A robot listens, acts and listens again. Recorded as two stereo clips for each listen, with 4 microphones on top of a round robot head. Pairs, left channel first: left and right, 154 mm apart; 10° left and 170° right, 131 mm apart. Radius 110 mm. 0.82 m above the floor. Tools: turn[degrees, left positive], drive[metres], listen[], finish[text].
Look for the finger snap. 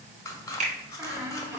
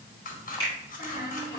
Thought: The finger snap: 50° right.
Action: turn[-50]
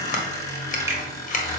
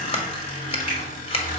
Action: listen[]
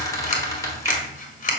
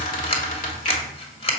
Action: listen[]
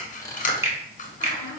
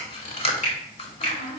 Thought: The finger snap is now 20° right.
Action: turn[-20]
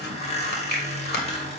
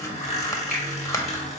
Action: listen[]
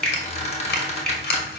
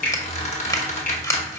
Action: finish[Facing the finger snap.]